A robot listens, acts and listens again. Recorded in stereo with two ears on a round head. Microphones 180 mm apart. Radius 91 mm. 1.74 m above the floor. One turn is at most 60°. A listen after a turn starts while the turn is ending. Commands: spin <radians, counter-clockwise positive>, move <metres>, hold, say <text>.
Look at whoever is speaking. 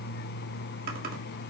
hold
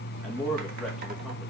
spin 0.52
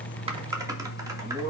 spin -0.61
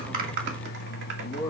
spin 0.26
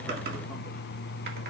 hold
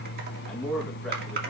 say Found it: a man speaking, straight ahead, 2 to 4 m away.